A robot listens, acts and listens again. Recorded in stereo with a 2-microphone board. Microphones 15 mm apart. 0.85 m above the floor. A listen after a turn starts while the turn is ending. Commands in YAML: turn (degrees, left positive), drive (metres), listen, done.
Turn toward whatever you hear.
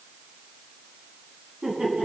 turn: -55
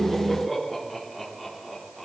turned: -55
done: "Found it: laughter, straight ahead."